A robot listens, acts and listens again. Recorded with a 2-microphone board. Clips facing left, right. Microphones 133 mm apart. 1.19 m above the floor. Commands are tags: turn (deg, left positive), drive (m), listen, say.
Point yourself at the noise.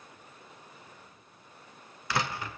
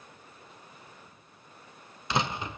<turn deg="-20"/>
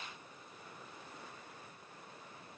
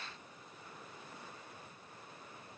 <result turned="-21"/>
<listen/>
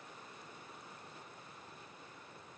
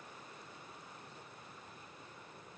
<say>I heard a door slam, but can't make it out now. It was about straight ahead or 135° right.</say>